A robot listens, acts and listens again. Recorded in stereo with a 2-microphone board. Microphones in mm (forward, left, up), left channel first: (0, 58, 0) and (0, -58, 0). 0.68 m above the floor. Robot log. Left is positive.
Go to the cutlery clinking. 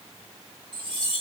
note: The cutlery clinking: about 45° right or 135° right.
cmd yaw -45
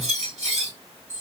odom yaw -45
note: So it is at 90° right.
cmd yaw -90
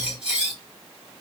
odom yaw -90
note: The cutlery clinking is now 10° right.
cmd yaw -10
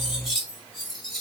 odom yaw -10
cmd fwd 1.0
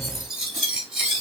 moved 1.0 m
cmd fwd 1.0
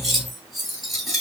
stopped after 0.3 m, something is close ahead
end: Arrived at the cutlery clinking, straight ahead.